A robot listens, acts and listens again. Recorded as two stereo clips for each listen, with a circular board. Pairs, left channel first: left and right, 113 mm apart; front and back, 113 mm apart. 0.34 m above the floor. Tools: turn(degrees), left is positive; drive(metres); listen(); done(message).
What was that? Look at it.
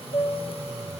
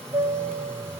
turn(degrees=110)
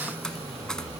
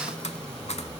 done("Found it: a chime, straight ahead.")